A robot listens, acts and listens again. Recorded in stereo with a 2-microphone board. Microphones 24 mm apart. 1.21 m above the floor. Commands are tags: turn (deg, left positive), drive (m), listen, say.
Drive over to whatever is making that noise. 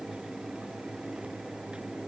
<listen/>
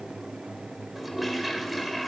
<turn deg="-30"/>
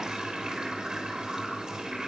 <turn deg="-145"/>
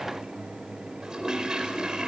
<turn deg="-35"/>
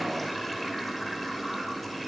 <drive m="1.0"/>
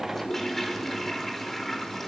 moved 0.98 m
<turn deg="10"/>
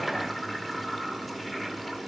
<drive m="1.0"/>
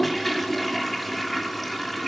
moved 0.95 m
<drive m="1.0"/>
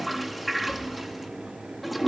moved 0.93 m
<drive m="1.0"/>
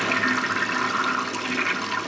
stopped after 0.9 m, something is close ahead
<say>Arrived at the toilet flushing, straight ahead.</say>